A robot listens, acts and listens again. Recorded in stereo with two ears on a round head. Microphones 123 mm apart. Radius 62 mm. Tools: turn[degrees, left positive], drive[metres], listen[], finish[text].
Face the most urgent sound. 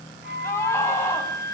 Thought: The scream: about 20° left or 160° left.
Action: turn[20]
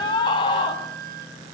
Thought: So it is at 140° left.
Action: turn[140]
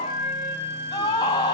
Thought: The scream is now 30° left.
Action: turn[30]
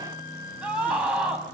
Thought: The scream is now 10° right.
Action: turn[-10]
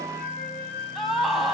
Action: finish[Facing the scream, over 4 m away.]